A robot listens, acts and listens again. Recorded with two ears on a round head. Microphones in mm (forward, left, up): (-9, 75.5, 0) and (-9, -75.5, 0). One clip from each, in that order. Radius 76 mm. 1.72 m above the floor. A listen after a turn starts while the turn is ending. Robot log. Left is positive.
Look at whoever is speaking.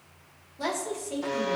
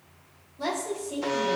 note: The woman speaking: about 40° left or 140° left.
cmd yaw +40
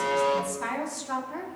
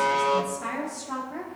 note: So it is at 100° left.
cmd yaw +100
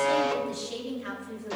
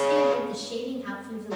note: The woman speaking is now 30° left.
cmd yaw +30
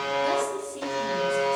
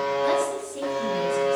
end: Found it: a woman speaking, straight ahead.